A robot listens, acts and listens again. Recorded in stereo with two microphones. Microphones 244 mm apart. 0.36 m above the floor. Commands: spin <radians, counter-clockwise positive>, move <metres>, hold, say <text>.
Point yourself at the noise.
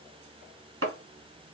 spin -1.22
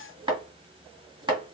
spin -0.35
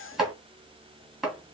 say Facing the chopping.